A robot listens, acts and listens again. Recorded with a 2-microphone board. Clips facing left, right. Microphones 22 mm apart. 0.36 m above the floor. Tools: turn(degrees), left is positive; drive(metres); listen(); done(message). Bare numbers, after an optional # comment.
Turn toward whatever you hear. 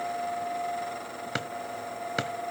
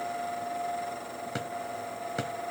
# The drawer: about 45° left or 135° left.
turn(45)
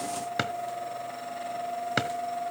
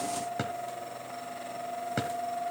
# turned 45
# So it is at 80° left.
turn(80)
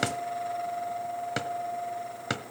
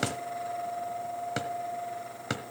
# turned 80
# The drawer is now 15° left.
turn(15)
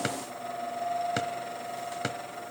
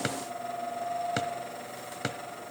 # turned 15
done("Found it: a drawer, straight ahead.")